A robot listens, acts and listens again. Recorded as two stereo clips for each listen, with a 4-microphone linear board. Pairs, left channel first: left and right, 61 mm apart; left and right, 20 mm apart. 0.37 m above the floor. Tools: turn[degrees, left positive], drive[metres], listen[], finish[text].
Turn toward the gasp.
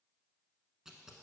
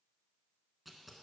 Action: listen[]
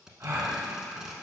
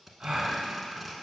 Thought: The gasp: about 50° right or 130° right.
Action: turn[-50]
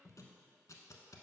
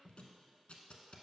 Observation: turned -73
Action: listen[]
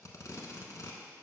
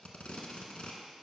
Action: finish[I heard a gasp, but can't make it out now. It was about 25° left or 60° right.]